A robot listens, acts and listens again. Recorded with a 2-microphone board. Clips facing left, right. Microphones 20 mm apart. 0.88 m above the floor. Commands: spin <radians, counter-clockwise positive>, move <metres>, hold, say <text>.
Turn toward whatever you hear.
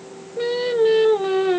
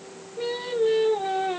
spin 1.22
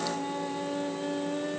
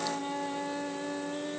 say Found it: singing, straight ahead, 1 to 2 m away.